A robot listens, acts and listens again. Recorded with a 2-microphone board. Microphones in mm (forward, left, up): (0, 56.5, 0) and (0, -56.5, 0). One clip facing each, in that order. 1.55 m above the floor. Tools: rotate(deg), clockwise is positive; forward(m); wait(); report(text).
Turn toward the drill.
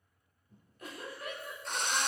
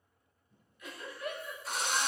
rotate(30)
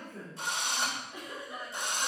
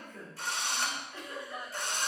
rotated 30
rotate(-25)
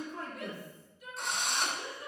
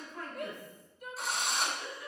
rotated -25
report("Facing the drill, 2 to 4 m away.")